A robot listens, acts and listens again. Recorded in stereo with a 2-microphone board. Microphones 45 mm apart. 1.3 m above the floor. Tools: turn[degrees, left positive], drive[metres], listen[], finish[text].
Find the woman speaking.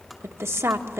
Action: turn[-90]
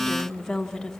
Thought: So it is at 10° left.
Action: turn[10]
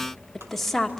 Action: finish[Found it: a woman speaking, straight ahead.]